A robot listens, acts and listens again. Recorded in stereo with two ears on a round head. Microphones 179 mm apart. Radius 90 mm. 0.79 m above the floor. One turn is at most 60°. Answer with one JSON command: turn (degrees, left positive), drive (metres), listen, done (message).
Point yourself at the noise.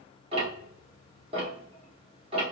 {"turn": -30}
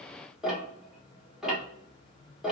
{"done": "Found it: ticking, straight ahead."}